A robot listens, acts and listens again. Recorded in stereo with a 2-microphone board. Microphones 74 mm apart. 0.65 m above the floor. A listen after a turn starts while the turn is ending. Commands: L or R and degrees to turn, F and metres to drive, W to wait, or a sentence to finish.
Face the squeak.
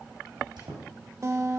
R90
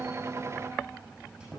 R10
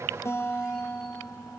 W
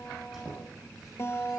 Facing the squeak.